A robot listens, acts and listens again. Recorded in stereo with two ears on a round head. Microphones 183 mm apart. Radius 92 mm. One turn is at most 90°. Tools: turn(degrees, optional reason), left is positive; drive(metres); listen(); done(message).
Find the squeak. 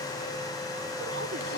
listen()
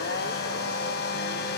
listen()
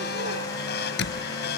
turn(degrees=60, reason="The squeak: about 60° left or 120° left.")
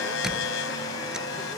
listen()
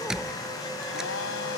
done("Facing the squeak.")